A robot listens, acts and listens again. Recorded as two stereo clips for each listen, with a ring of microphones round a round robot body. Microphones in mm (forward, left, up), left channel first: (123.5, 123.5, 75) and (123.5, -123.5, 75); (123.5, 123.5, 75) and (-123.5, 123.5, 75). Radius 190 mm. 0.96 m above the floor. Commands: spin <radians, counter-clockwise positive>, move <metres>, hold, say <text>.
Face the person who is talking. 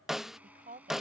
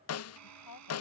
spin -0.61
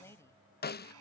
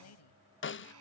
spin 0.17
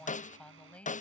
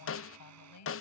say Found it: a woman speaking, straight ahead.